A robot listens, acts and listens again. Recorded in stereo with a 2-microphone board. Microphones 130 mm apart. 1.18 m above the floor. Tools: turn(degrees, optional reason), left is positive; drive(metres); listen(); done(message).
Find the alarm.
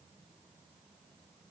listen()
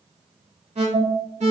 turn(degrees=-65, reason="The alarm: about 65° right or 115° right.")
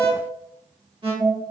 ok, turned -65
turn(degrees=-45, reason="So it is at 45° right.")
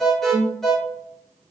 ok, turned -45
done("Found it: an alarm, straight ahead, 1 to 2 m away.")